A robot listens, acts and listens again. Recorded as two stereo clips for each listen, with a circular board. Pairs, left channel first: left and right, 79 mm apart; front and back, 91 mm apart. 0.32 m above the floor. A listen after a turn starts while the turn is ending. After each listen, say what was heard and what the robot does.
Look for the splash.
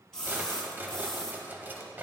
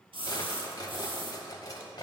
The splash: 170° left. Turn 170° left.
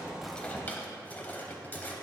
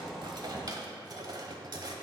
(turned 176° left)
Facing where the splash came from. I can't hear it now.